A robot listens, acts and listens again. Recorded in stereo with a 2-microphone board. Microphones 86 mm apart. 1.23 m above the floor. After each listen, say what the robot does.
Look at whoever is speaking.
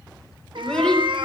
Turn 30° left.
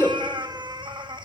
Turn 140° left.
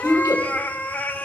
Turn 45° left.
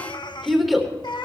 Facing the child speaking, 2 to 4 m away.